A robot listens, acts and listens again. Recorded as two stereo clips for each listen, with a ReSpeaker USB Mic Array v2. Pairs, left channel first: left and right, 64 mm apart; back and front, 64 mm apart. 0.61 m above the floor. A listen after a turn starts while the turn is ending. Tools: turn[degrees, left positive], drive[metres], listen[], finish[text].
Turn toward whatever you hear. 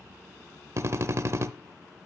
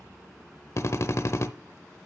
Thought: The drill: 135° right.
Action: turn[-135]
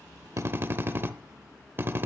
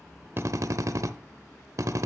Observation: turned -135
Thought: The drill is now 35° right.
Action: turn[-35]
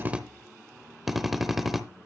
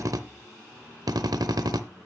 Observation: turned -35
Action: finish[Facing the drill.]